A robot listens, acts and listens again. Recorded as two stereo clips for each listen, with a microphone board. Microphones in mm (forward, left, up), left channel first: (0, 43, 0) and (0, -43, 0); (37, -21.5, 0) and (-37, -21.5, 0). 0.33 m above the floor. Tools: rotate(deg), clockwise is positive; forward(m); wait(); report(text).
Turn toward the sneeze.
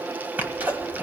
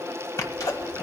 rotate(20)
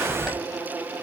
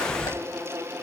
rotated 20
report("Facing the sneeze, 1 to 2 m away.")